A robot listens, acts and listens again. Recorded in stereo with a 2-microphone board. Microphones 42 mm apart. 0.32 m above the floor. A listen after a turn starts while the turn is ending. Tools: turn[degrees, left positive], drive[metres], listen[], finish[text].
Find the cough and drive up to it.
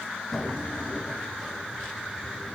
Action: listen[]
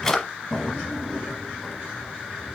Action: listen[]
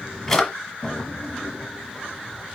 Action: finish[I can't make out a cough to turn to.]